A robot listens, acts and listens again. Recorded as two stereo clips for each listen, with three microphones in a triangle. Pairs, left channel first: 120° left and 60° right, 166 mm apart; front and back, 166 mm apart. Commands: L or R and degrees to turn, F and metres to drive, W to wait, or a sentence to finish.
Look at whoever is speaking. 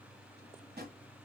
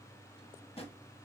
W
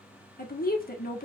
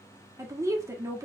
L110
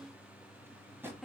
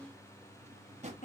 L30
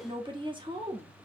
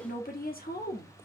Facing the woman speaking.